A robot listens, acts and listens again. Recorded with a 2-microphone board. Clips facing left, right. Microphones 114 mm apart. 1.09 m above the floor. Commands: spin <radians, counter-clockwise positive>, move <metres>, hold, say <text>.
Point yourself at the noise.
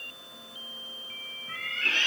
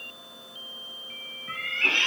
spin -1.57
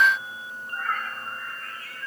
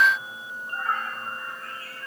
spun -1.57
spin -0.61
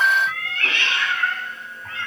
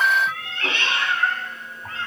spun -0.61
spin -0.52
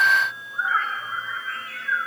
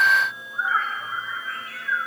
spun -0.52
say Found it: a cat meowing, straight ahead.